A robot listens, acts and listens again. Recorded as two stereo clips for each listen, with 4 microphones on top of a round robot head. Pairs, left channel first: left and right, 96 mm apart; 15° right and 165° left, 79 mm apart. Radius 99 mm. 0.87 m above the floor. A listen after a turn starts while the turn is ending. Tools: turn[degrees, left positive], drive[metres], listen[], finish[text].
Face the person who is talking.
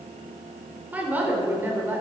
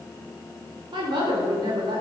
Thought: The woman speaking: 160° right.
Action: turn[-160]
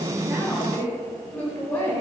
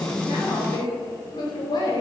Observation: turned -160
Thought: The woman speaking is now 20° left.
Action: turn[20]
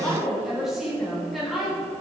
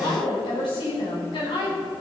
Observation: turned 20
Action: finish[Facing the woman speaking.]